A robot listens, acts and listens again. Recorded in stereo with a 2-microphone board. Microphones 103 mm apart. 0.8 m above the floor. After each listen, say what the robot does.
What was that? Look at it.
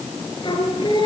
Turn 50° left.
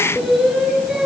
Found it: singing, straight ahead, over 4 m away.